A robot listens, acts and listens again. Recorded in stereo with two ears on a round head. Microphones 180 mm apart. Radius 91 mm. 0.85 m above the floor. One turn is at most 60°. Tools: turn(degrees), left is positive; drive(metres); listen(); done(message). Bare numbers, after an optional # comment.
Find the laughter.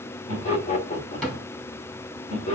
# The laughter: about 35° left or 145° left.
turn(35)
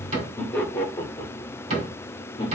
# So it is at 25° left.
turn(25)
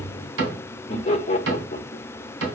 # The laughter is now 30° left.
turn(30)
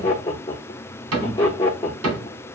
# The laughter is now 15° left.
turn(15)
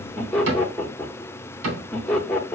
done("Found it: laughter, straight ahead, 1 to 2 m away.")